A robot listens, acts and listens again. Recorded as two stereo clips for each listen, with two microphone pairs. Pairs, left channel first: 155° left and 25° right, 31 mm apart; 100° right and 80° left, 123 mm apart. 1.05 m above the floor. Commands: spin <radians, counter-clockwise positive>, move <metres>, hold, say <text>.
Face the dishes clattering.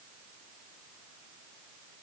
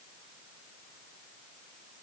hold
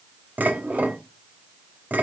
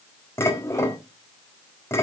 spin -0.61
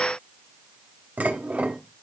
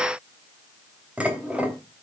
say Found it: dishes clattering, straight ahead.